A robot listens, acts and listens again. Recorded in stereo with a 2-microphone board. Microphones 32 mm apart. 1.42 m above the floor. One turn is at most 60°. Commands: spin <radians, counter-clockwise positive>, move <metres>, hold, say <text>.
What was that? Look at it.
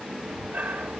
spin -1.05
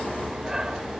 spin -0.35
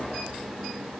hold
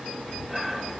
say Facing the breathing.